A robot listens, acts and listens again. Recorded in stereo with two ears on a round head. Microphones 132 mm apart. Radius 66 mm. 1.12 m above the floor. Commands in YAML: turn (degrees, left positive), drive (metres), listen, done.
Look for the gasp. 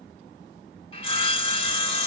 listen: true
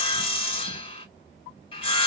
listen: true
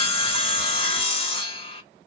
done: "I can't make out a gasp, only sawing."